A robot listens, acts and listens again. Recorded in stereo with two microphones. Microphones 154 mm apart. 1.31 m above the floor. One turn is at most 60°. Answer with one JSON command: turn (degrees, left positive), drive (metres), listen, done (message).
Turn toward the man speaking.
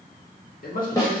{"turn": 60}
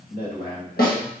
{"turn": 60}
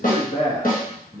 {"turn": 60}
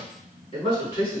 {"turn": 40}
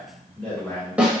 {"done": "Found it: a man speaking, straight ahead, 2 to 4 m away."}